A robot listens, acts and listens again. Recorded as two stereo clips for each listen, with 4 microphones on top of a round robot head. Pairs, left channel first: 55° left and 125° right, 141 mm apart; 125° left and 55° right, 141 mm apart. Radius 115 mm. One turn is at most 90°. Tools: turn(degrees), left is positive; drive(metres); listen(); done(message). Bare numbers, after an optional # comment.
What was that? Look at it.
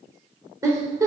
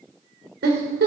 # The giggle: 55° right.
turn(-55)
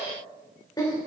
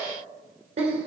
# The giggle is now 10° right.
turn(-10)
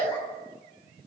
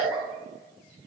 listen()
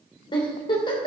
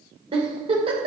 done("Found it: a giggle, straight ahead.")